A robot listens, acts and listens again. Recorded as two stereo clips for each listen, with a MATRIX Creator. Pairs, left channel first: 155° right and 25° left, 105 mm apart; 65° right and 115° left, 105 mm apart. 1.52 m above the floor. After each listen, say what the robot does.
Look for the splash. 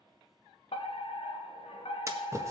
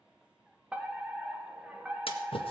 Turn 40° right.
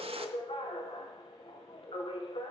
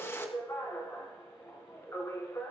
Found it: a splash, straight ahead, 1 to 2 m away.